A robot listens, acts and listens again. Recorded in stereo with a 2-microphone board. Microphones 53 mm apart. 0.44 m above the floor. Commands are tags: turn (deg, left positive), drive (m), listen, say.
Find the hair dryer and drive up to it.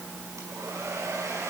<turn deg="-75"/>
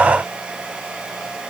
<turn deg="-20"/>
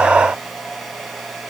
<drive m="1.0"/>
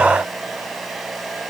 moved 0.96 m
<drive m="1.0"/>
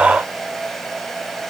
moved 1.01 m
<drive m="1.0"/>
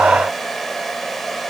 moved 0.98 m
<drive m="1.0"/>
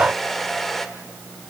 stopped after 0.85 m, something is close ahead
<say>I am next to the hair dryer.</say>